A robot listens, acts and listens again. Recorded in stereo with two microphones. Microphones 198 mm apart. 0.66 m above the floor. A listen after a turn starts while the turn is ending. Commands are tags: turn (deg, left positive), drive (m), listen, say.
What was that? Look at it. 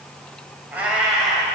<turn deg="30"/>
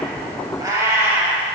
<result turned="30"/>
<turn deg="-30"/>
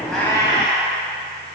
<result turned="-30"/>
<turn deg="25"/>
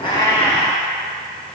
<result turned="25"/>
<say>Found it: a cat meowing, straight ahead.</say>